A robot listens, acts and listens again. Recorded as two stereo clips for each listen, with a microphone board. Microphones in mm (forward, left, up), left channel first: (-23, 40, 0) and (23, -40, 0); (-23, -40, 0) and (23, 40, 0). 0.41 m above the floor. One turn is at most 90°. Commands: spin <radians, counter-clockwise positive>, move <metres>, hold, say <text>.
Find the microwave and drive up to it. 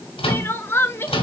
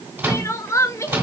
spin 1.57
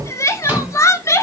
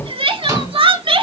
spin 0.17
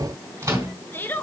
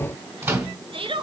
move 1.0
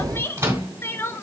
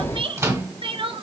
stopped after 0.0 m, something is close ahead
say Blocked. The microwave is further on, straight ahead.